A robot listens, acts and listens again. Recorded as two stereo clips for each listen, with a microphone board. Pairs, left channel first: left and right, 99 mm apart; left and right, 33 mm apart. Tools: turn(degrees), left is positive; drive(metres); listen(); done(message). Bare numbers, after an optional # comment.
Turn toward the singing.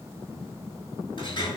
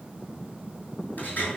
listen()
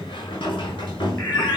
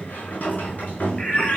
# The singing: about 25° left or 155° left.
turn(25)
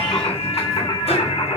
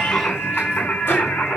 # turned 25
# So it is at 120° left.
turn(120)
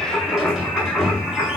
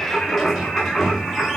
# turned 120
done("Found it: singing, straight ahead.")